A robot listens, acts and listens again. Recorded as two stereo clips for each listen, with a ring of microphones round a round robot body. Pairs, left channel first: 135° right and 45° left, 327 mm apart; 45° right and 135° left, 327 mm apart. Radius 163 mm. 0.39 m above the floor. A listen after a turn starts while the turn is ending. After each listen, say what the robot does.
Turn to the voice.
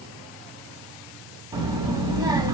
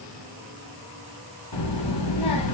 Turn 35° right.
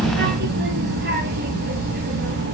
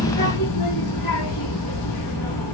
Turn 15° right.
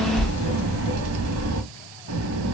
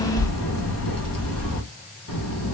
Found it: a child speaking, straight ahead.